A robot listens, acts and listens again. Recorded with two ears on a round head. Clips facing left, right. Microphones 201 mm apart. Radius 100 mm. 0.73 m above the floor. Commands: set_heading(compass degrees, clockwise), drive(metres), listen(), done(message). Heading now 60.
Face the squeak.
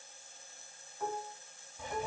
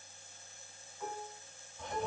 listen()
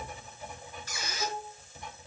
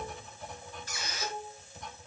set_heading(350)
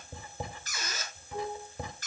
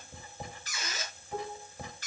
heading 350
set_heading(310)
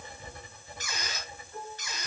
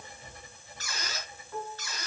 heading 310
set_heading(295)
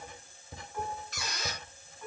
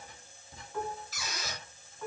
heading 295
done("Found it: a squeak, straight ahead, over 4 m away.")